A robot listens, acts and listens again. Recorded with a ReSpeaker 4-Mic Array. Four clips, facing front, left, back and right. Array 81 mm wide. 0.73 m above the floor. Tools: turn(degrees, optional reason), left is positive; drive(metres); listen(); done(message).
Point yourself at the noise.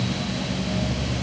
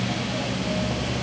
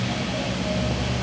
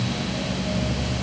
listen()
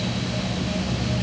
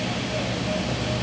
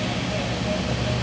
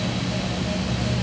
listen()
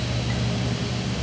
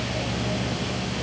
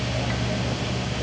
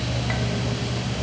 done("I can't make out anything to turn to.")